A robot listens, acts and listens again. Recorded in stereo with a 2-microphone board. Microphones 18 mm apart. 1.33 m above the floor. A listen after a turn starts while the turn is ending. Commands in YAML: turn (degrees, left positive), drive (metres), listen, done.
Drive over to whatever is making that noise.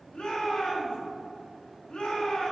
turn: 90
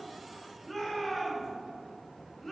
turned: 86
turn: 10
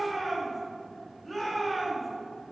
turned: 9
drive: 1.0
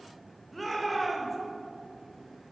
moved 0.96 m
drive: 1.0
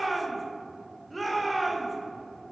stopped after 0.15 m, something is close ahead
done: "Arrived at the shout, straight ahead."